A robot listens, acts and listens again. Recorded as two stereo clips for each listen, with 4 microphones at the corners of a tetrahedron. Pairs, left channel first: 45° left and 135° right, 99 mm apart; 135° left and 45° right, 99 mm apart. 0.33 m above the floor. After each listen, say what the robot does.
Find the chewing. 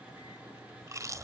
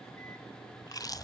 Turn 175° left.
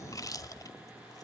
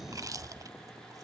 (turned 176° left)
Found it: chewing, straight ahead.